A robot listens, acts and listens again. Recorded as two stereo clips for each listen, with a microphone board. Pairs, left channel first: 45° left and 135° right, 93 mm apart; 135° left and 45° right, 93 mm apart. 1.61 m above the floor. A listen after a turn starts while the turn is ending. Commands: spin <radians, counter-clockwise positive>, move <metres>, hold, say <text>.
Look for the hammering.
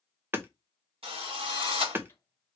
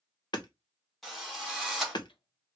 spin 2.79
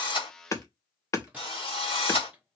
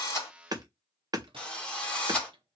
say Found it: hammering, straight ahead.